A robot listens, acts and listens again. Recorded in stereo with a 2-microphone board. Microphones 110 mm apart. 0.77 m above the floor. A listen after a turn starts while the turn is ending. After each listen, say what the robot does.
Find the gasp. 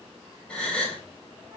Turn 30° left.
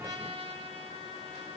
Keep listening.
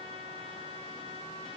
I heard a gasp, but can't make it out now. It was about 20° right or 140° left.